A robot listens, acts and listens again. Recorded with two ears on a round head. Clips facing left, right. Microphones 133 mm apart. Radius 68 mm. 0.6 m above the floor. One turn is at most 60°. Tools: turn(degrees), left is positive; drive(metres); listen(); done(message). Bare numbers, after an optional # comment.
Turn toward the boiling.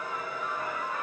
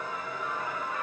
listen()
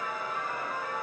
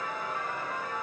listen()
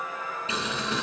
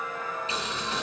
# The boiling: about 70° left or 110° left.
turn(60)
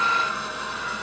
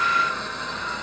# So it is at 10° left.
turn(10)
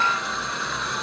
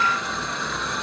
done("Found it: boiling, straight ahead.")